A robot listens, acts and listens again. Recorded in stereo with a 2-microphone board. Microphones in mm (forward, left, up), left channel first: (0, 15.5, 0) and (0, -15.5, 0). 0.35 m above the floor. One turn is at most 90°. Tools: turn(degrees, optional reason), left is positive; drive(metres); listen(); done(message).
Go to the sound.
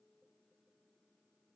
listen()
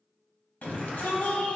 turn(degrees=60, reason="The shout: about 60° left or 120° left.")
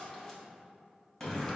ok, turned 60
turn(degrees=15, reason="So it is at 15° left.")
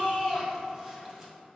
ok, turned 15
drive(metres=1.0)
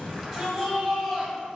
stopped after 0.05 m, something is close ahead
done("Something is in my way. I am facing the shout but have not reached it.")